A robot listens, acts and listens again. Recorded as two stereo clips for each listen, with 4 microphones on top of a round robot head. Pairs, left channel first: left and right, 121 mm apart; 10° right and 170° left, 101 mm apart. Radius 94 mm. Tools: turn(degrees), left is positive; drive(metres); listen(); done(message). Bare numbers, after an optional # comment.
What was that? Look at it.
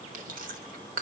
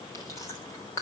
# The chewing: 80° right.
turn(-80)
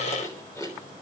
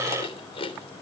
# The chewing is now 20° left.
turn(20)
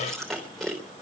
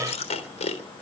done("Facing the chewing, 2 to 4 m away.")